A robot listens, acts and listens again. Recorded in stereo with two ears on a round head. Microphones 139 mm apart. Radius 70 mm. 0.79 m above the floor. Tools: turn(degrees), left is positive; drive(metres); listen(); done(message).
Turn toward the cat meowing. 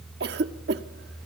listen()
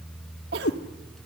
turn(degrees=75)
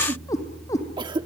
turn(degrees=20)
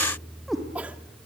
done("Facing the cat meowing, 2 to 4 m away.")